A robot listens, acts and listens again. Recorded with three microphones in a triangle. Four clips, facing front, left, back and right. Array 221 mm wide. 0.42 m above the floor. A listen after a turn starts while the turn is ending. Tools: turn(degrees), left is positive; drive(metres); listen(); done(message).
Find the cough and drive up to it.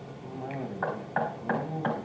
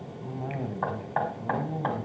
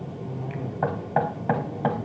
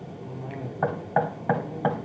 turn(degrees=65)
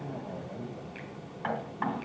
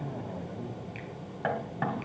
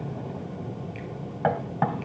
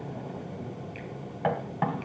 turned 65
listen()
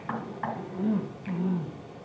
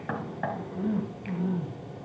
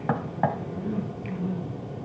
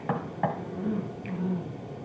turn(degrees=30)
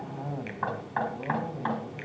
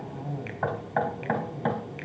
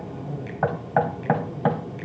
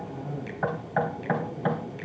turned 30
turn(degrees=10)
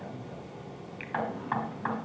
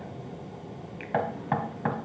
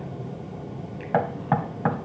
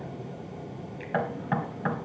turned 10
listen()
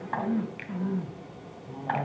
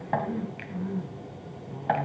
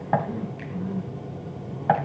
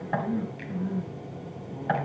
drive(metres=1.0)
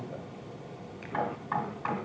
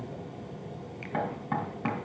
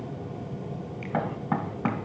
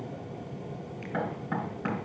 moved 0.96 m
listen()
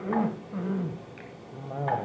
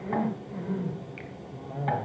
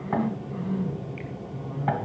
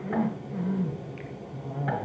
drive(metres=1.0)
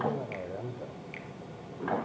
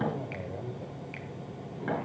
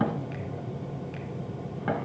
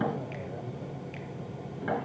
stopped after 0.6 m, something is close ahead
turn(degrees=10)
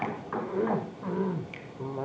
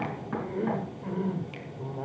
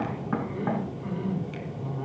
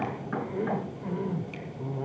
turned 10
done("Arrived at the cough, straight ahead.")